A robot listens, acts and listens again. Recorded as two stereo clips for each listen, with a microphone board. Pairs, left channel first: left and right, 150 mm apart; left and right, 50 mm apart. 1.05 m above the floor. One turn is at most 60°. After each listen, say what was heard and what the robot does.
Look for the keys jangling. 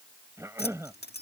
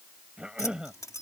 Turn 60° left.
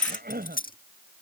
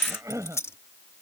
So it is at 60° left. Turn 60° left.
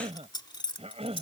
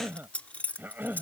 The keys jangling is now 30° left. Turn 30° left.
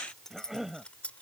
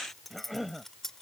Facing the keys jangling.